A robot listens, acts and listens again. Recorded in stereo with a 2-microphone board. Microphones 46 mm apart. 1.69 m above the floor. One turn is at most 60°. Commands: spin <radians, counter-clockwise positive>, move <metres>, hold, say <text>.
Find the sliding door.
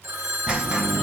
spin -0.35
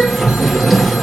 say Facing the sliding door, 1 to 2 m away.